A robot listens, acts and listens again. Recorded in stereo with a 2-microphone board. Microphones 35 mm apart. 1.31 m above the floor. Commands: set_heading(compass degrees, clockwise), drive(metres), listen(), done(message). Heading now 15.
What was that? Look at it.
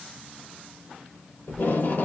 set_heading(285)
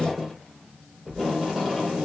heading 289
done("Facing the tape being pulled, 2 to 4 m away.")